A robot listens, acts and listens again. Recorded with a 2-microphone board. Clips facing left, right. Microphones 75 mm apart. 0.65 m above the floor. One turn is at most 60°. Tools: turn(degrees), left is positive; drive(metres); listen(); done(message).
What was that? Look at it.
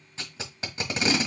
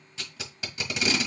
turn(degrees=35)
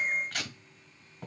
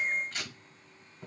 turn(degrees=60)
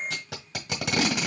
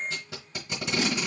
turn(degrees=60)
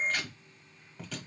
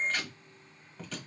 done("Found it: tape being pulled, straight ahead, 1 to 2 m away.")